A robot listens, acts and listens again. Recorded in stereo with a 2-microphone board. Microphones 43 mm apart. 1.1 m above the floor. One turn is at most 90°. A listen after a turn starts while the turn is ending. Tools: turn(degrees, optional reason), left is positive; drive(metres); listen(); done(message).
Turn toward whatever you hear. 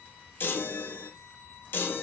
turn(degrees=60, reason="The chime: about 60° left or 120° left.")
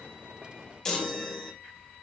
turn(degrees=20, reason="So it is at 20° left.")
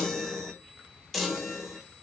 done("Facing the chime, 1 to 2 m away.")